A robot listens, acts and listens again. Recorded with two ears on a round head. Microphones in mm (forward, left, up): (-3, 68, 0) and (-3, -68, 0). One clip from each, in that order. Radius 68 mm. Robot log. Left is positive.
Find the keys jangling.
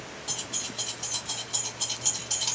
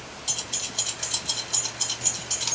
cmd yaw -30
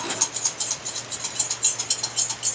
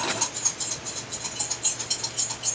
note: So it is at 55° left.
cmd yaw +55
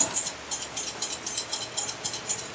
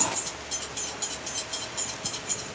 note: The keys jangling is now 20° left.
cmd yaw +20
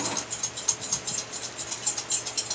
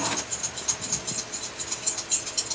end: Facing the keys jangling.